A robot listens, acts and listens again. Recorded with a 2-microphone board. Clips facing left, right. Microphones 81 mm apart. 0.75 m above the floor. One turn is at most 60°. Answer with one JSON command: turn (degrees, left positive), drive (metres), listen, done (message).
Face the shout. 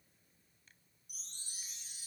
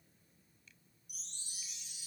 {"listen": true}
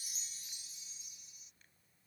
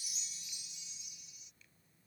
{"listen": true}
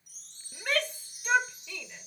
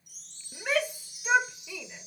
{"turn": -30}
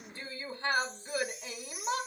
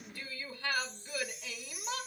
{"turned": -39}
{"turn": 30}
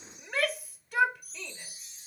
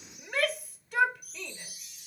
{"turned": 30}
{"done": "Facing the shout."}